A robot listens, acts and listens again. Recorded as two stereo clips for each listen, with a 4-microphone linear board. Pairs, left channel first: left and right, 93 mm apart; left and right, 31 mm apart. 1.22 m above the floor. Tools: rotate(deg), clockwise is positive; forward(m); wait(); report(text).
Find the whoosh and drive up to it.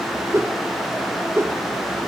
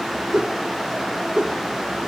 rotate(30)
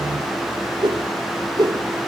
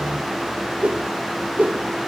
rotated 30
rotate(120)
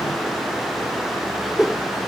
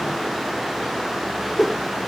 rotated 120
forward(1.0)
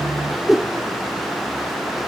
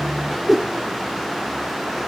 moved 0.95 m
forward(1.0)
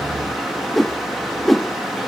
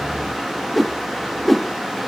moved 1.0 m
forward(1.0)
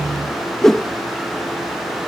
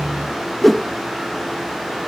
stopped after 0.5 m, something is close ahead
report("I am next to the whoosh.")